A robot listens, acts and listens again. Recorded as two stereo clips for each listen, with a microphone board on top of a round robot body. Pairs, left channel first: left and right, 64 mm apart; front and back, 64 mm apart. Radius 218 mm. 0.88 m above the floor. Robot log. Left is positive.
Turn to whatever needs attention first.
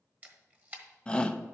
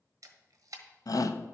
note: The shout: 15° left.
cmd yaw +15
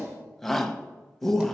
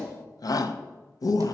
end: Facing the shout.